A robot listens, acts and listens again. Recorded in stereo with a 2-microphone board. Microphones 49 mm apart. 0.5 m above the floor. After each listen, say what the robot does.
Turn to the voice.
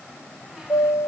Keep listening.
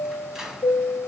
Keep listening.
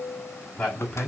Turn 20° left.
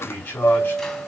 Turn 135° left.
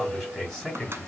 Facing the man speaking, over 4 m away.